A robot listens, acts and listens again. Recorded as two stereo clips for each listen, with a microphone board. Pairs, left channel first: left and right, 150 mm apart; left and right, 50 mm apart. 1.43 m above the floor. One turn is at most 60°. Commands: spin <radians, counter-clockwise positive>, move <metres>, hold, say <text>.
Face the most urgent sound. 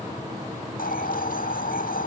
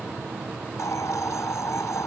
hold
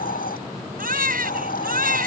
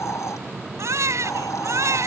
spin -1.05
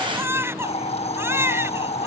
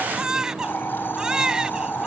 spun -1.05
spin -0.26
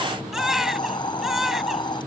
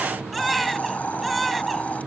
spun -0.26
say Found it: a baby crying, straight ahead.